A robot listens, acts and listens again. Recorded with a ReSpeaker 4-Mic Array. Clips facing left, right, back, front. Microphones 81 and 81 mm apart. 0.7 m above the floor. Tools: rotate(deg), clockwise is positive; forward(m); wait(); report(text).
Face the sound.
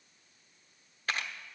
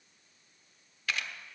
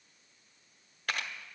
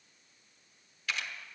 rotate(-140)
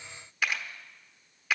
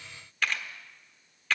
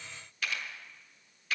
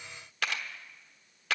rotate(-10)
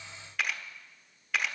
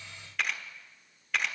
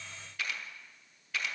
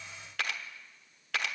report("Found it: a camera shutter, straight ahead, 1 to 2 m away.")